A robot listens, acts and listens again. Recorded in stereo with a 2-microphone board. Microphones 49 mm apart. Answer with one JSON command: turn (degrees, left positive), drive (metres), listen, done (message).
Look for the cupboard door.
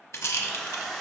{"listen": true}
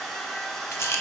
{"listen": true}
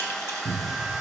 {"turn": 55}
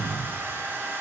{"done": "Facing the cupboard door."}